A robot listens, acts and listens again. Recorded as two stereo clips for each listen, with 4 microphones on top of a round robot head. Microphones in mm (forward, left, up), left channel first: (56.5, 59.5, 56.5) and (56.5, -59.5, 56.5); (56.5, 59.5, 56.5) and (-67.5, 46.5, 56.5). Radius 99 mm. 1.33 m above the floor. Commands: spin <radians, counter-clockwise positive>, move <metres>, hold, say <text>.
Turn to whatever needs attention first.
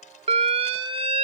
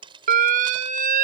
spin -2.44
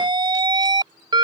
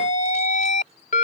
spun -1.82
spin -0.70
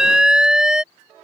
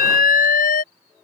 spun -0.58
say Facing the alarm.